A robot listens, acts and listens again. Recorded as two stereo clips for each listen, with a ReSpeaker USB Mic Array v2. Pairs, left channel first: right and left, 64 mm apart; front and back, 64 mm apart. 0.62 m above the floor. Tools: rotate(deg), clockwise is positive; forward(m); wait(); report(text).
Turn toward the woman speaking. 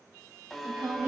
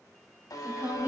rotate(-130)
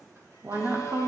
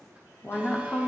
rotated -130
rotate(-65)
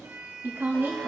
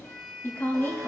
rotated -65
rotate(-55)
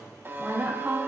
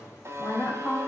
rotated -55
rotate(-20)
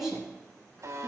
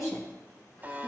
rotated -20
report("Facing the woman speaking.")